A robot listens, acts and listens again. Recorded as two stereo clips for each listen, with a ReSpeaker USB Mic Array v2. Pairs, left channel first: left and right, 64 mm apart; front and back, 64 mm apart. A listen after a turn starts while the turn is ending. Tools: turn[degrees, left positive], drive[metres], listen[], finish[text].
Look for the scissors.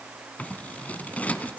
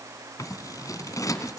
Thought: The scissors: 25° left.
Action: turn[25]
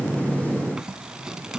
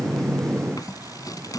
Thought: The scissors is now 10° right.
Action: turn[-10]
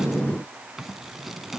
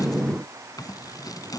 Action: finish[Facing the scissors.]